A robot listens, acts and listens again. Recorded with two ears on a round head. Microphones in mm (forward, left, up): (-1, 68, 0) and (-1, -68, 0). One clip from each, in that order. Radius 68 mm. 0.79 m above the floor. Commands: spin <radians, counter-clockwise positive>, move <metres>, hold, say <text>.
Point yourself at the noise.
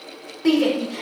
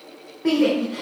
spin 1.22
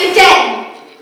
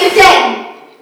spin 0.61
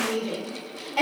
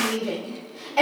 say Facing the shout.